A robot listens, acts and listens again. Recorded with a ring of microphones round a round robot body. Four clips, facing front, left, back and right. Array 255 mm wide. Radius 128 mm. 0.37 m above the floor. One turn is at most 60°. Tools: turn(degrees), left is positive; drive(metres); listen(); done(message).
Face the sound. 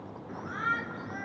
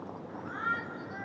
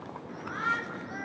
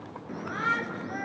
turn(degrees=-60)
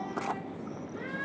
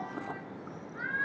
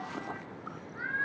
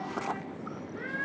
turn(degrees=-40)
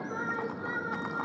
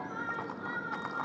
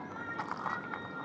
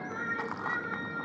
turn(degrees=-20)
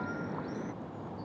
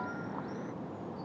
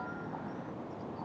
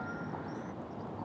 listen()
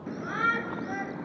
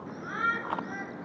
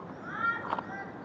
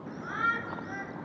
done("Facing the shout.")